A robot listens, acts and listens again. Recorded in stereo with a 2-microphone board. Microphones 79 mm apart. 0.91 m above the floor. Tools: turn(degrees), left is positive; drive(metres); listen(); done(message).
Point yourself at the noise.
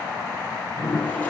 turn(degrees=20)
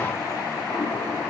listen()
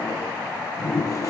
turn(degrees=145)
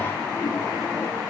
turn(degrees=30)
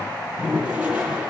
turn(degrees=-15)
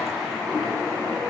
done("Facing the toilet flushing.")